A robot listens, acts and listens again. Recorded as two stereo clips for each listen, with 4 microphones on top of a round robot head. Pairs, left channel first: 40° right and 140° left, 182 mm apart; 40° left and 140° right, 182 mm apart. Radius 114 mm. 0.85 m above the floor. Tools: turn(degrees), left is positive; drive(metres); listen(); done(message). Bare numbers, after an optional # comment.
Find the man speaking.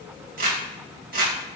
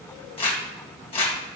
listen()
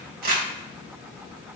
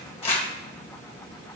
listen()
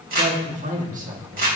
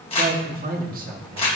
# The man speaking: straight behind.
turn(180)
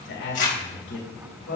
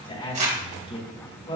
# The man speaking is now 20° right.
turn(-20)
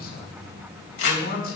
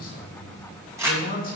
done("Facing the man speaking.")